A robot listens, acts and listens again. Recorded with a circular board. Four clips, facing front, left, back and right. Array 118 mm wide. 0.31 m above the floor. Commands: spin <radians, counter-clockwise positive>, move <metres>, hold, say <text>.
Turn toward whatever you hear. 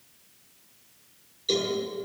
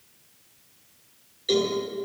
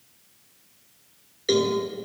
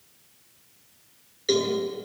spin -2.71
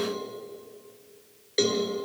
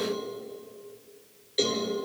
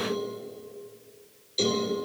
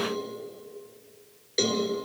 spin -0.35
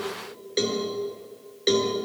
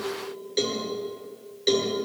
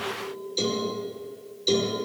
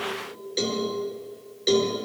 say Found it: a cowbell, straight ahead, over 4 m away.